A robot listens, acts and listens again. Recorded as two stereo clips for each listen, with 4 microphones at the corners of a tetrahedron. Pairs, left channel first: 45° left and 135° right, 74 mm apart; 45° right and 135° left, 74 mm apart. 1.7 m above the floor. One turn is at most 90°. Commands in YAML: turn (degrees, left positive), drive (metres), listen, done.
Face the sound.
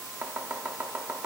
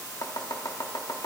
turn: -70
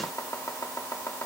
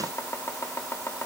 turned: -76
done: "Found it: chopping, straight ahead, 1 to 2 m away."